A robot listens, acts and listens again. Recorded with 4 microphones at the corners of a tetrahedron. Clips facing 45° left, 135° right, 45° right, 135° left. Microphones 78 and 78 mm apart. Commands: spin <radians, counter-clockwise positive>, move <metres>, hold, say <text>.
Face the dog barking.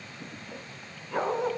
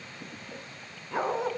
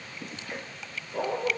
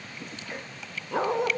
spin 2.44
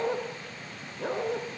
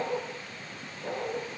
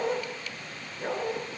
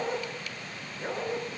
spin 0.79
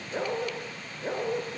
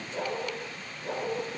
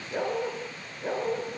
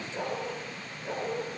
spin 0.17
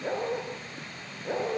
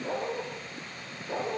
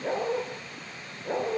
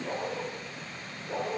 say Facing the dog barking, over 4 m away.